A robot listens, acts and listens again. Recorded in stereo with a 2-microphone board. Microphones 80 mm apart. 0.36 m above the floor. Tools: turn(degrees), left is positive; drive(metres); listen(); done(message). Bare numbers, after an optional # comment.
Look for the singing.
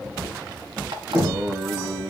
# The singing: about 60° right or 120° right.
turn(-60)
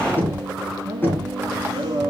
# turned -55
# So it is at 65° right.
turn(-65)
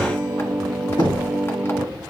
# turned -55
# The singing is now 10° right.
turn(-10)
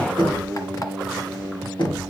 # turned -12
done("Facing the singing.")